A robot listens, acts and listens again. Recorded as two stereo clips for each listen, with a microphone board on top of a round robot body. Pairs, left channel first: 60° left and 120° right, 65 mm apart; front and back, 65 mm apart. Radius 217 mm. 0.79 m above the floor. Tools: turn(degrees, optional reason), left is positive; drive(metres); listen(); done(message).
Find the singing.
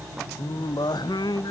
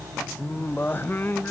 turn(degrees=60, reason="The singing: 60° left.")
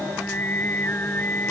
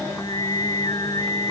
done("Found it: singing, straight ahead.")